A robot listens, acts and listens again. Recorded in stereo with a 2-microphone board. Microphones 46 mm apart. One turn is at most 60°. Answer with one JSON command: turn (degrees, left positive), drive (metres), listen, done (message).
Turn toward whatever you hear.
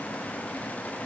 {"listen": true}
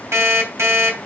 {"turn": -60}
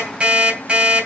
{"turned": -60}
{"turn": -25}
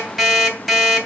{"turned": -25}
{"done": "Facing the alarm clock, 2 to 4 m away."}